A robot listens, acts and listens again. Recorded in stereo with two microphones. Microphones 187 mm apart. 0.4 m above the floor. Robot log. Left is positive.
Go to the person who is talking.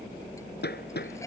cmd idle
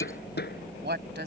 note: The woman speaking: about 65° right or 115° right.
cmd yaw -65
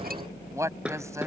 note: So it is at 15° right.
cmd yaw -15
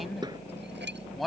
cmd fwd 1.0
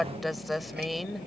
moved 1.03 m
cmd fwd 1.0
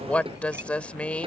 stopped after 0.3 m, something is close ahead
note: The woman speaking is now 10° left.
cmd yaw +10
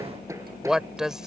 end: I am next to the woman speaking.